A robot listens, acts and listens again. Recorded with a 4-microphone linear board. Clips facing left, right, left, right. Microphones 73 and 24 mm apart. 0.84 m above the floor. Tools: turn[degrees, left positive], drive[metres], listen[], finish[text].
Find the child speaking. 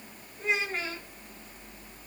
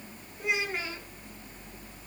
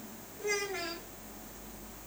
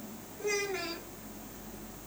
Action: turn[-30]
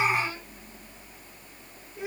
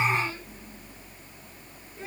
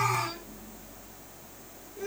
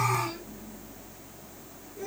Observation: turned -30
Thought: So it is at 15° left.
Action: turn[15]
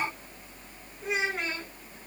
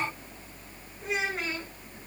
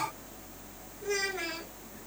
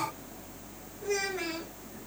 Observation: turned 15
Action: finish[Facing the child speaking, over 4 m away.]